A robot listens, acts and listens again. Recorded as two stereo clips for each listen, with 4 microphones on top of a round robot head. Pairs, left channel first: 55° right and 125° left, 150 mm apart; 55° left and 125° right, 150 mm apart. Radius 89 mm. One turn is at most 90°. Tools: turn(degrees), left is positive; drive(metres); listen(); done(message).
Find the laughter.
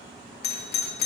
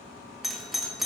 listen()
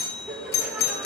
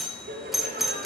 turn(degrees=-90)
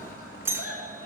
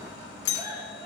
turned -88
turn(degrees=-55)
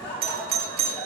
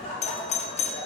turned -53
done("Found it: laughter, straight ahead, over 4 m away.")